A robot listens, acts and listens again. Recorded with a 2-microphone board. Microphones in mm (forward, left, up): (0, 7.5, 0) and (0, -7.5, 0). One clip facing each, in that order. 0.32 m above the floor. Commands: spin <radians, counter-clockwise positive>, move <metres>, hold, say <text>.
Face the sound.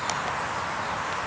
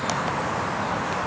hold
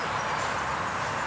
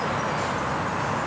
hold
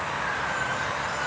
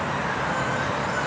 say I can't make out anything to turn to.